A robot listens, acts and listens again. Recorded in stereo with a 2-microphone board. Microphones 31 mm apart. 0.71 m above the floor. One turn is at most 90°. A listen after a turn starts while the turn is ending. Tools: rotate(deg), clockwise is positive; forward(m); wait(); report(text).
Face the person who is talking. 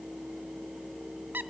wait()
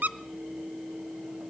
wait()
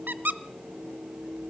report("I can't make out anyone speaking, only a squeak.")